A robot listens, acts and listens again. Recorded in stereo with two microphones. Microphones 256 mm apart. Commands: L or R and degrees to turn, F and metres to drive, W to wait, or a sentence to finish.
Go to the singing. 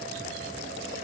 W
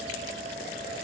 W
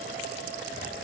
I can't make out singing.